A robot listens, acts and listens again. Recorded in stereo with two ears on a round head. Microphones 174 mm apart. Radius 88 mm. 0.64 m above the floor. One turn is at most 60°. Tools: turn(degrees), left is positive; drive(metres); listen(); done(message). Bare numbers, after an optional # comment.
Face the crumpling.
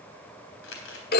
# The crumpling: about 65° left or 115° left.
turn(60)
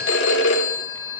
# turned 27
listen()
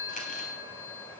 listen()
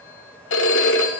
done("I heard crumpling, but can't make it out now. It was about 40° left or 90° left.")